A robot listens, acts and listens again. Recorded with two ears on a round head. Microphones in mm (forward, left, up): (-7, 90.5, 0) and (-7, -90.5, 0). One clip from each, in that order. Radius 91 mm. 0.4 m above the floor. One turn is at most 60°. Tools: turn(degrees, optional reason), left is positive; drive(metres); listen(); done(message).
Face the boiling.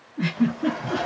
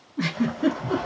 turn(degrees=-45, reason="The boiling: about 45° right or 135° right.")
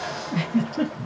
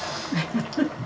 turn(degrees=-60, reason="So it is at 80° right.")
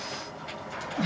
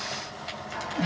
turn(degrees=-30, reason="The boiling is now 30° right.")
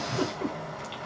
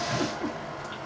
turn(degrees=15, reason="The boiling is now 15° left.")
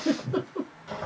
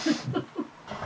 done("Found it: boiling, straight ahead.")